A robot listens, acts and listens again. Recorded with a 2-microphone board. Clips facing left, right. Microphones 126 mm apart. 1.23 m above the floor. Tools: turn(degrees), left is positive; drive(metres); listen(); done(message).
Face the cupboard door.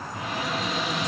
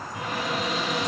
turn(degrees=-45)
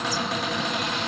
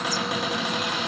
turn(degrees=-15)
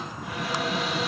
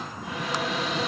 done("Facing the cupboard door, 1 to 2 m away.")